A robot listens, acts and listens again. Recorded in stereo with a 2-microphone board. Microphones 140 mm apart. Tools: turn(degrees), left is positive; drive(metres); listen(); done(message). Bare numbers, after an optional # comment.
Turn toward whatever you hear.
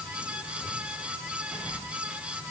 listen()
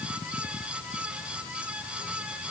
listen()
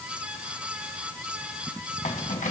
# The keys jangling: about 65° left or 115° left.
turn(65)
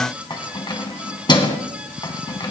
# So it is at 35° left.
turn(35)
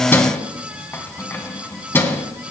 # The keys jangling is now 15° left.
turn(15)
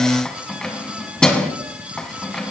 done("Found it: keys jangling, straight ahead, 1 to 2 m away.")